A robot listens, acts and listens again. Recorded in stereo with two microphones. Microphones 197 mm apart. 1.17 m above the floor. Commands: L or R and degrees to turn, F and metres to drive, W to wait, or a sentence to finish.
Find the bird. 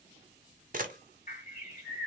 L45
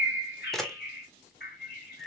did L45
L80
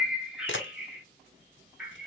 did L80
Facing the bird, 1 to 2 m away.